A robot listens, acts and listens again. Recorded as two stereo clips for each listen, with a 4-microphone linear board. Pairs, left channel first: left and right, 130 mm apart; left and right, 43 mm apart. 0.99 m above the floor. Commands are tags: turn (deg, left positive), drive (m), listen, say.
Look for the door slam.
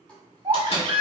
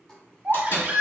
<turn deg="60"/>
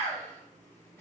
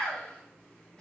<listen/>
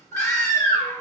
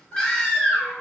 <say>I heard a door slam, but can't make it out now. It was about straight ahead or 60° left.</say>